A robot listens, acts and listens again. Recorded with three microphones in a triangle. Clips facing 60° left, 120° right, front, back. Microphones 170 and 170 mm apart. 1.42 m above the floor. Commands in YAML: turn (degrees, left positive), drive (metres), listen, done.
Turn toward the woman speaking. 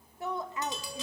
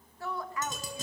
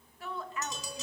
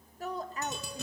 turn: 125
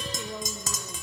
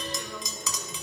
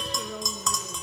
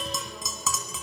listen: true
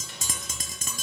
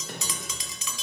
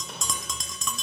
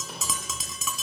listen: true
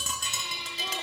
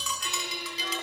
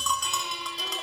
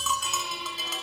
done: "Facing where the woman speaking came from. I can't hear it now."